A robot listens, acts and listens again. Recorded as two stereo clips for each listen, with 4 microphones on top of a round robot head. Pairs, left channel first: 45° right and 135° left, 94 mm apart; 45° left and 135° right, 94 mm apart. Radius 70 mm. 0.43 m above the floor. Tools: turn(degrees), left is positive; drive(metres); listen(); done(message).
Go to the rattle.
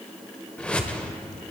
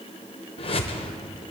listen()
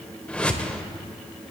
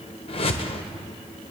listen()
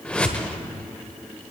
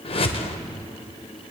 done("I can't make out a rattle, only a whoosh.")